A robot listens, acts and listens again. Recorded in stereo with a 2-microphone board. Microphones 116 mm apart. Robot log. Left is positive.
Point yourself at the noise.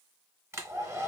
note: The hair dryer: about 20° right or 160° right.
cmd yaw -20
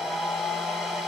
end: Facing the hair dryer, 1 to 2 m away.